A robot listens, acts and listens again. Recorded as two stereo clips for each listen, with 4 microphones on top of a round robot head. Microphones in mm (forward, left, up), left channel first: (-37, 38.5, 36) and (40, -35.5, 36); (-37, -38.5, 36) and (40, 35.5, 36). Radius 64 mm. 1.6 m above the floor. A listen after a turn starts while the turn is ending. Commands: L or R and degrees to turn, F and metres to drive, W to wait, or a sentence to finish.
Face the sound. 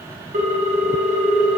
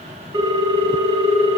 R10
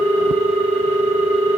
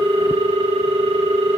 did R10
Found it: a ringtone, straight ahead.